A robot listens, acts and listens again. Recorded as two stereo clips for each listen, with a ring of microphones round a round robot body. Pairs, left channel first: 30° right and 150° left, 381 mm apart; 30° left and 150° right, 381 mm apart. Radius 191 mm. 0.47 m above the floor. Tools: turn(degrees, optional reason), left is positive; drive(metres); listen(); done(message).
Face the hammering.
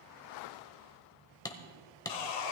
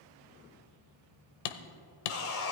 turn(degrees=50, reason="The hammering: 50° left.")
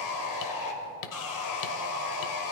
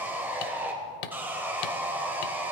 turn(degrees=10, reason="The hammering is now 10° left.")
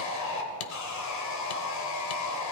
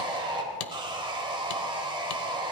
done("Facing the hammering, 1 to 2 m away.")